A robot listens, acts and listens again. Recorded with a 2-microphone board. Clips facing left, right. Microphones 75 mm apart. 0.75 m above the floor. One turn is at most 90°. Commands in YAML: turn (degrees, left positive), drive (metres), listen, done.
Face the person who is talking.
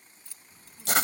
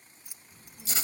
turn: 30
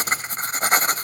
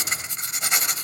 listen: true
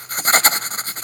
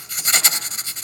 listen: true
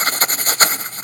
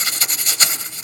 done: "I heard a child speaking, but can't make it out now. It was about 25° right or 145° left."